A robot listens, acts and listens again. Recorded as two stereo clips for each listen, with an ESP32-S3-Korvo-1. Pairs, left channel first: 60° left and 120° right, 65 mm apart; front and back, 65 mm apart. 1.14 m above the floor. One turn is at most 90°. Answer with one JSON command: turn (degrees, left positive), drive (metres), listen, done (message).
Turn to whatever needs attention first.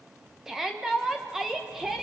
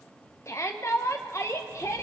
{"turn": -35}
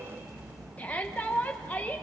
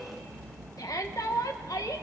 {"done": "Facing the shout, 1 to 2 m away."}